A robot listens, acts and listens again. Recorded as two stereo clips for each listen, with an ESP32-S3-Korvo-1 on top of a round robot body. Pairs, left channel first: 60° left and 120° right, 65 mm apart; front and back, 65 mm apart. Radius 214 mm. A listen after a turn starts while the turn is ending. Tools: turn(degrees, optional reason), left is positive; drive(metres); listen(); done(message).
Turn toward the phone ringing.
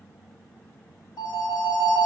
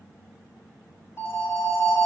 turn(degrees=55, reason="The phone ringing: 55° left.")
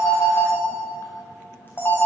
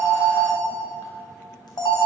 done("Facing the phone ringing, under 1 m away.")